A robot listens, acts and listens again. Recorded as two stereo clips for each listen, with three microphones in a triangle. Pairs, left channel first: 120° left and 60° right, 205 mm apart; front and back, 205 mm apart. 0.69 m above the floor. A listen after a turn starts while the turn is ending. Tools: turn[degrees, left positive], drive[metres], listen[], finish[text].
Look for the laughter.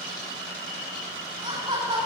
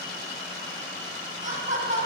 Thought: The laughter: 125° right.
Action: turn[-125]
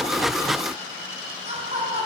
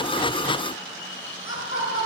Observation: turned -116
Action: finish[Found it: laughter, straight ahead, over 4 m away.]